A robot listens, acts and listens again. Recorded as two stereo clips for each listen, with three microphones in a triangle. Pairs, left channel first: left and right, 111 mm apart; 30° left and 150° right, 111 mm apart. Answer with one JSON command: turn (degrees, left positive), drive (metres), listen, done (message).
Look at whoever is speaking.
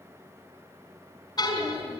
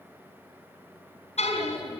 {"turn": -60}
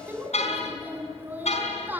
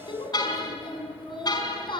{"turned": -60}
{"turn": -15}
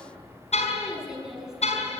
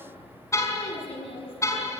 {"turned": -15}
{"done": "Facing the child speaking, over 4 m away."}